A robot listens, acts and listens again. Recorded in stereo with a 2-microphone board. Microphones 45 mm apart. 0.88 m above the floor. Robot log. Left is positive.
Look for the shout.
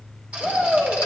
note: The shout: about 25° left or 155° left.
cmd yaw +25
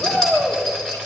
note: So it is at 130° left.
cmd yaw +130
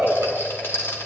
end: Facing the shout.